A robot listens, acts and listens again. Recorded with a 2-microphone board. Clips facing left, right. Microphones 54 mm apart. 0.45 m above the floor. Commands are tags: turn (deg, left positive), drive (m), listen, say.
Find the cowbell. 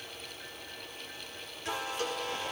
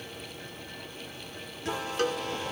<turn deg="-60"/>
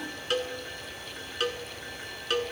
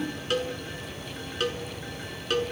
<say>Facing the cowbell.</say>